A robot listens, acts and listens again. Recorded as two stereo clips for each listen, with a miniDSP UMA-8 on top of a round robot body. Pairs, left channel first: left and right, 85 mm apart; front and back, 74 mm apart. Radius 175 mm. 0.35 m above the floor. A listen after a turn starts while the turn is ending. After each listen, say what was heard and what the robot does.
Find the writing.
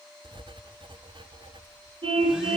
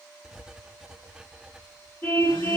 The writing: 100° right. Turn 100° right.
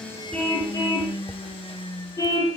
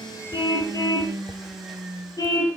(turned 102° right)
Keep listening.
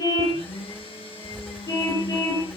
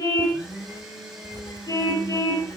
Keep listening.
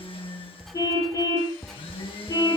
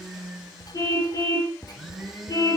Facing the writing, 1 to 2 m away.